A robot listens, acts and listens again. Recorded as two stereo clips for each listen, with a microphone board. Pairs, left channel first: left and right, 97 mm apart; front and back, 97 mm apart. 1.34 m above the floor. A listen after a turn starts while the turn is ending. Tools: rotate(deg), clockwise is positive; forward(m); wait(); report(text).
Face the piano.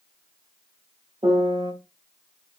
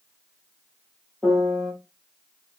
rotate(90)
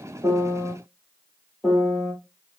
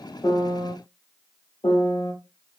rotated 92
report("Facing the piano, 2 to 4 m away.")